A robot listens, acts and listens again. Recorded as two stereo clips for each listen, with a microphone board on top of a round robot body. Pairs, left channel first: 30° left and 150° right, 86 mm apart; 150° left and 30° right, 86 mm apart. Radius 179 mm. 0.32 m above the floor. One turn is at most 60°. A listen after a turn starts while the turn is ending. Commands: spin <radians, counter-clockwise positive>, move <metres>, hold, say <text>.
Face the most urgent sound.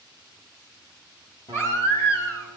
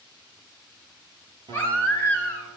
spin 1.05
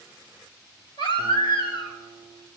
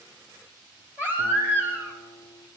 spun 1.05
spin 0.61
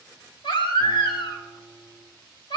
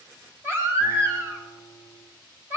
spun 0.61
spin 0.52
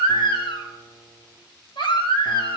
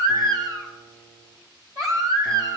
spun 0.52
spin 0.26
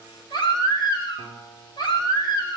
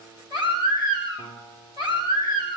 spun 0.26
say Facing the baby crying, 2 to 4 m away.